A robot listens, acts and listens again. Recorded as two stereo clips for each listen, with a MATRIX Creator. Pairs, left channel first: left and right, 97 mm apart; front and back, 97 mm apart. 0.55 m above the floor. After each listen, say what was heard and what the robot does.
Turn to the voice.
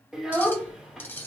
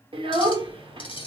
The child speaking: 175° right. Turn 175° right.
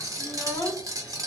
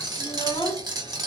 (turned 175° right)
The child speaking is now 25° left. Turn 25° left.
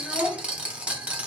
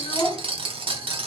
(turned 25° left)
Facing the child speaking, 1 to 2 m away.